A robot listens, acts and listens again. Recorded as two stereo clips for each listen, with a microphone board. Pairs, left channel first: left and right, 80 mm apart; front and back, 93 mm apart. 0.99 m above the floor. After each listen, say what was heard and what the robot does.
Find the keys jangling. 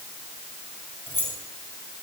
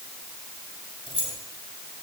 The keys jangling: 25° left. Turn 25° left.
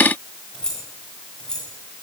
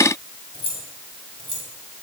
The keys jangling is now 10° left. Turn 10° left.
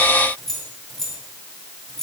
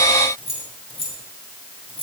Facing the keys jangling, over 4 m away.